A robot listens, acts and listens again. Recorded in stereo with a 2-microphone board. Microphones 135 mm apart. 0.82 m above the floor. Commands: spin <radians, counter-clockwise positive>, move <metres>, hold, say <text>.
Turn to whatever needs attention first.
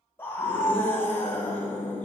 spin 0.26
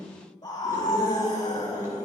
spin 2.62
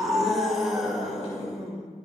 say Facing the scream, over 4 m away.